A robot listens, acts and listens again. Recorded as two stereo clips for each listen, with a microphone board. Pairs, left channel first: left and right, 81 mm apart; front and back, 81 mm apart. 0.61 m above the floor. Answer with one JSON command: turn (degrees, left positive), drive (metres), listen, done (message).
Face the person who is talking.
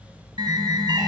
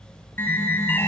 {"listen": true}
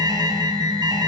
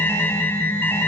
{"listen": true}
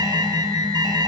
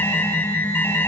{"done": "I can't make out anyone speaking, only an alarm."}